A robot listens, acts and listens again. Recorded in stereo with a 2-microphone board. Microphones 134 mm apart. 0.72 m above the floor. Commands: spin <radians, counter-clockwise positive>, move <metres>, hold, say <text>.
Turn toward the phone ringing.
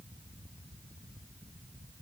hold
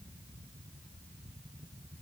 hold
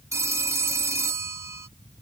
spin -0.35
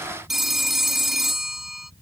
say Facing the phone ringing.